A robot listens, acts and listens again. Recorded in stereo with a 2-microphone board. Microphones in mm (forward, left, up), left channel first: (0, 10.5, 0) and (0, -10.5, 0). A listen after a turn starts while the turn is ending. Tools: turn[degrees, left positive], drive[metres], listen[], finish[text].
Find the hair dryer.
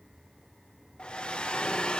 Thought: The hair dryer: about 50° left or 130° left.
Action: turn[50]
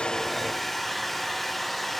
Action: finish[Facing the hair dryer.]